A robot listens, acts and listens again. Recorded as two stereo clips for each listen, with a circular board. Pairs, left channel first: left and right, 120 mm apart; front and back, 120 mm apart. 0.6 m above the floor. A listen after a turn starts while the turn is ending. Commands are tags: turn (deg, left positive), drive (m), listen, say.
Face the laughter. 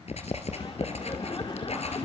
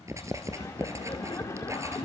<turn deg="60"/>
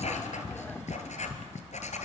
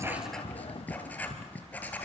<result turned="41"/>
<turn deg="20"/>
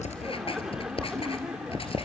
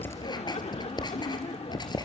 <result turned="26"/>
<say>Facing the laughter, 1 to 2 m away.</say>